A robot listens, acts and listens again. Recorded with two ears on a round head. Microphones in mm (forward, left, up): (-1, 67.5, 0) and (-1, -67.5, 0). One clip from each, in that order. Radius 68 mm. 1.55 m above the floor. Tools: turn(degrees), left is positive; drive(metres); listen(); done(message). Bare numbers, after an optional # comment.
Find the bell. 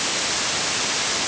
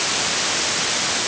listen()
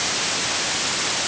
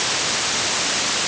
listen()
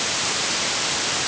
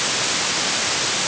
done("I can't make out a bell.")